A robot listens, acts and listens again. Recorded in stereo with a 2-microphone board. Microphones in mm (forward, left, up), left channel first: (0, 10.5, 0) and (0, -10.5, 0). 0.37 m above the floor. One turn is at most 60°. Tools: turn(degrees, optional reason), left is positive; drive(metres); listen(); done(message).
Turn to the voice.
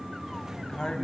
turn(degrees=45, reason="The man speaking: about 45° left or 135° left.")
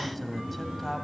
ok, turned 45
turn(degrees=10, reason="So it is at 10° left.")
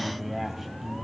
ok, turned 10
done("Facing the man speaking, 2 to 4 m away.")